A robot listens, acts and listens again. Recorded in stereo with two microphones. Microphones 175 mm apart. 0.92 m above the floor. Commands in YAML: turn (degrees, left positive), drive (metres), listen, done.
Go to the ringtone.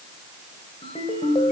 turn: 30
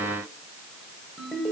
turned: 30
drive: 1.0
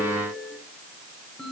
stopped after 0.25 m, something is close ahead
done: "Something is in my way. I am facing the ringtone but have not reached it."